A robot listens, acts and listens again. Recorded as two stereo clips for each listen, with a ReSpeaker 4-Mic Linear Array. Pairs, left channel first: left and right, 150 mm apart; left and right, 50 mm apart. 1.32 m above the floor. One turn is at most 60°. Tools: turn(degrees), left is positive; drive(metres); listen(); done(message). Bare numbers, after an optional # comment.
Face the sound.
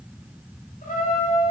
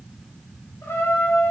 # The trumpet: about 65° left or 115° left.
turn(60)
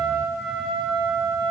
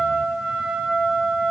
done("Found it: a trumpet, straight ahead.")